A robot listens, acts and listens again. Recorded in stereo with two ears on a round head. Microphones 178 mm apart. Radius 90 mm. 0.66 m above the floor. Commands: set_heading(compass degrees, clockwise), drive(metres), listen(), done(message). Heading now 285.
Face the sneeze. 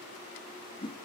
listen()
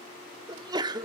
set_heading(305)
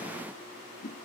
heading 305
listen()
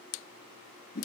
done("I heard a sneeze, but can't make it out now. It was about straight ahead or 140° right.")